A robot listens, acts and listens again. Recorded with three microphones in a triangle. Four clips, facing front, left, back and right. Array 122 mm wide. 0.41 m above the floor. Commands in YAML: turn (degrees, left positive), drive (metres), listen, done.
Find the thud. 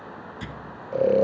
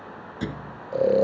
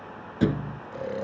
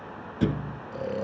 turn: -165
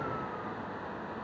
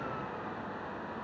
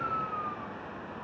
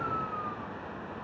done: "I heard a thud from this way, but can't make it out now."